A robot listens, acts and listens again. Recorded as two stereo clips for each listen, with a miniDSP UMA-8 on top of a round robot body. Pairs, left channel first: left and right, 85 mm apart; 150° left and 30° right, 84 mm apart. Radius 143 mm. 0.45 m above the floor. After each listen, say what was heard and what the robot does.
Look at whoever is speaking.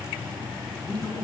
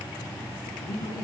The man speaking: 150° left. Turn 150° left.
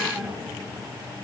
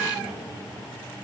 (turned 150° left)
Keep listening.
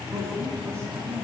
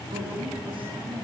The man speaking is now 45° right. Turn 45° right.
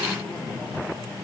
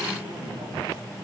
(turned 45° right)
Found it: a man speaking, straight ahead, over 4 m away.